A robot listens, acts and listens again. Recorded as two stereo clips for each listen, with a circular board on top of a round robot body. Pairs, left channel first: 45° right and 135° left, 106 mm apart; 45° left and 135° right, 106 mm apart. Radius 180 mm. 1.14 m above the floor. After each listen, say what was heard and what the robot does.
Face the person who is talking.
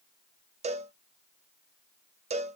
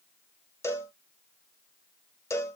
Keep listening.
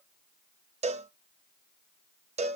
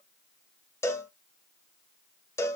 Keep listening.
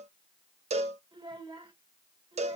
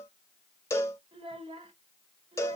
The child speaking: straight behind. Turn 180° left.
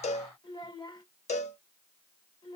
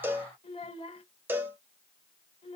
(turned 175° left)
Found it: a child speaking, straight ahead.